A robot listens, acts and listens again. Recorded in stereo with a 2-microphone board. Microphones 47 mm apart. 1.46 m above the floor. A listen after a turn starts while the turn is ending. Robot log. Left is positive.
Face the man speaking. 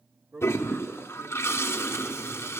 cmd yaw -90
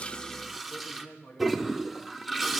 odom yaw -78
note: So it is at 35° left.
cmd yaw +35
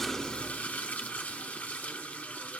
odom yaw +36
cmd idle
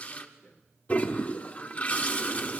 note: The man speaking is now 30° left.
cmd yaw +30
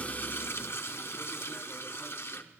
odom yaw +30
cmd idle
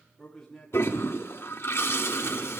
end: Facing the man speaking.